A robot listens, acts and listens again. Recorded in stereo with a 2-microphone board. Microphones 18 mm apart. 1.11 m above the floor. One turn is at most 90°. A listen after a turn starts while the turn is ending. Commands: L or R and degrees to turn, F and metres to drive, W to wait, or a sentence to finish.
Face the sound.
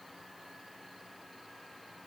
W
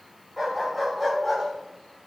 R30
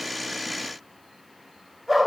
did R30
R20
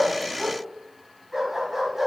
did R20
R30
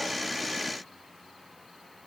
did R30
W
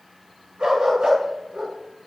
R90
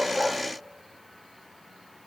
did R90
R30
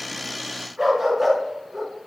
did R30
R10
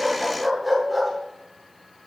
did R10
Found it: a dog barking, straight ahead.